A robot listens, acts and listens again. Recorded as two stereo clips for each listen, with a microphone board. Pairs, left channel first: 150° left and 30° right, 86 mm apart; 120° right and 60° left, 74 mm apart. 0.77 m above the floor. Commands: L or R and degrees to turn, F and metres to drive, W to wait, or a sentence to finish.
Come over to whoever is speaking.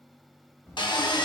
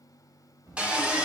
L85
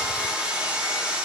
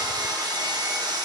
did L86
W
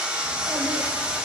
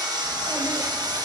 W
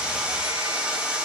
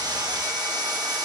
Facing where the child speaking came from. I can't hear it now. I did not reach it.